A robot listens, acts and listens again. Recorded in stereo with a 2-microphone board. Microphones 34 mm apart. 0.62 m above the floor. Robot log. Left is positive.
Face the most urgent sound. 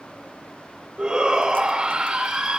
note: The shout: about 20° right or 160° right.
cmd yaw -20
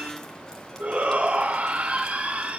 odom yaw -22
note: So it is at 135° right.
cmd yaw -135
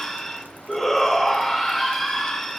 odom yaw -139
end: Facing the shout.